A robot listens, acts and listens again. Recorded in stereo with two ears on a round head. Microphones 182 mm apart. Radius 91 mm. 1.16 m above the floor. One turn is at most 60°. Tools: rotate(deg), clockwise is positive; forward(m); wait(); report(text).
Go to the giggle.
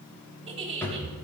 rotate(30)
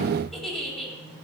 forward(1.0)
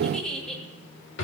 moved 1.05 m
forward(1.0)
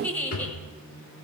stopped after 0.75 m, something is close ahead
rotate(-10)
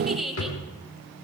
report("I am next to the giggle.")